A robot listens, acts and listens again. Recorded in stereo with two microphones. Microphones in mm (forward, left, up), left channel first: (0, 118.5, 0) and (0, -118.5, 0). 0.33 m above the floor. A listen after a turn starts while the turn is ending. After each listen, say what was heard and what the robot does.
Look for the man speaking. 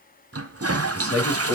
The man speaking: about 75° left or 105° left. Turn 75° left.
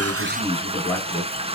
Found it: a man speaking, straight ahead, over 4 m away.